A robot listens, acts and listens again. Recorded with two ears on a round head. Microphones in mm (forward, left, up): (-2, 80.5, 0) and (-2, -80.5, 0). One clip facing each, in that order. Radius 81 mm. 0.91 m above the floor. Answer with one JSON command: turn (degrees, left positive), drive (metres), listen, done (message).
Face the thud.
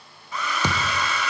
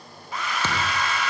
{"turn": 30}
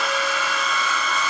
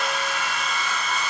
{"listen": true}
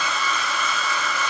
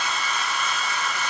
{"done": "I heard a thud, but can't make it out now. It was about 15° right or 135° left."}